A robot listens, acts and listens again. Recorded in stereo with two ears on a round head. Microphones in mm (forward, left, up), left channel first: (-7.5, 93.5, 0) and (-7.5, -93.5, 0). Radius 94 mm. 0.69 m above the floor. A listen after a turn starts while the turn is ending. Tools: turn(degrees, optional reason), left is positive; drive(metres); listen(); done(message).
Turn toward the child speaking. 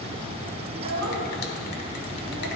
turn(degrees=-90)
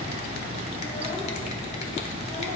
listen()
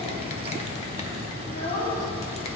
turn(degrees=50, reason="The child speaking is now 50° left.")
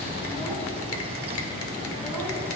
listen()
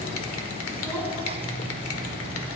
listen()
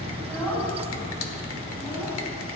done("Found it: a child speaking, straight ahead.")